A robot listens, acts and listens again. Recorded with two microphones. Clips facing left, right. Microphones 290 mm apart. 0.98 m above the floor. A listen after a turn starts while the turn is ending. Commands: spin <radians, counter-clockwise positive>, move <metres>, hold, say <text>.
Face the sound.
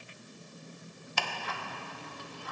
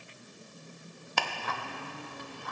spin -1.05
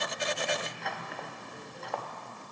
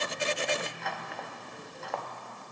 say Found it: ticking, straight ahead, under 1 m away.